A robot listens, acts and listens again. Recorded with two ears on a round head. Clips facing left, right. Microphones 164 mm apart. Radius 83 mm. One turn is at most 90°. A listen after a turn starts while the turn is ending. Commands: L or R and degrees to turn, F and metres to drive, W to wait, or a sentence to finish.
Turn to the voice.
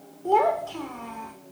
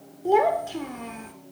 R25
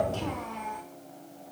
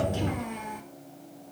R20
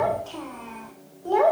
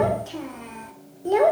R25
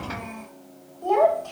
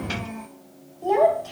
R30
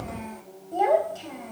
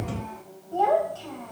L15
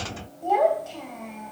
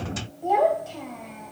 Facing the child speaking.